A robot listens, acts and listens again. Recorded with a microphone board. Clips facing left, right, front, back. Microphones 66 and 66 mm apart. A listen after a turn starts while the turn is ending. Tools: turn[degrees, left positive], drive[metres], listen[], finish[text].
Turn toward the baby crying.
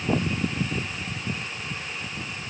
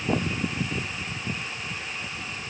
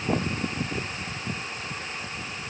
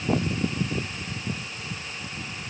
Action: listen[]
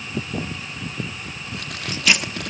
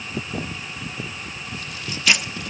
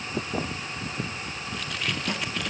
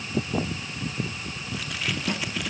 Action: listen[]
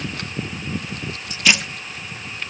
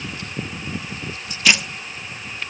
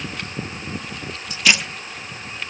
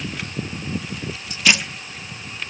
Action: finish[I can't make out a baby crying to turn to.]